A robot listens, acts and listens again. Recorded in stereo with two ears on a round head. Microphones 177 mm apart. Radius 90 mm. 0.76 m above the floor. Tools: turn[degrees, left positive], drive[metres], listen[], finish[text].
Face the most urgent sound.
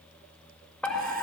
Action: turn[30]
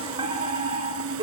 Thought: So it is at 25° right.
Action: turn[-25]
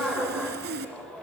Action: finish[Facing the fire alarm.]